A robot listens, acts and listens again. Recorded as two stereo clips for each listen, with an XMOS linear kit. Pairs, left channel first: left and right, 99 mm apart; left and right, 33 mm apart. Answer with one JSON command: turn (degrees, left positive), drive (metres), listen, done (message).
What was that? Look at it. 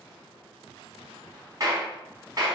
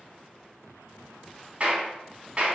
{"turn": -40}
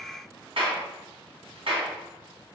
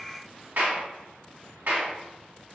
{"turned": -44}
{"turn": -95}
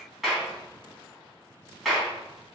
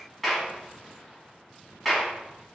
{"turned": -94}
{"done": "Facing the clap."}